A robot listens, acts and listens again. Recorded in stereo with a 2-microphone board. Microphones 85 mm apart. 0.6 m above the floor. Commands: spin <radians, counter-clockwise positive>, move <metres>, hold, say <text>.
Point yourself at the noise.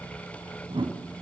spin -1.57
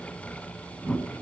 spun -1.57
spin 0.26
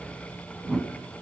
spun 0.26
say Facing the whoosh.